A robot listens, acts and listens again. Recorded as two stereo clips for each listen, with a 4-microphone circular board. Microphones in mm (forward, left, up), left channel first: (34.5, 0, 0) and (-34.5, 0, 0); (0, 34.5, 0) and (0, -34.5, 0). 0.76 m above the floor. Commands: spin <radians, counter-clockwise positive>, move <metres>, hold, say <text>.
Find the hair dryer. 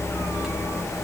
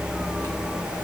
hold
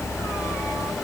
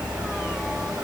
hold
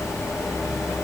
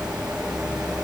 say I can't make out a hair dryer to turn to.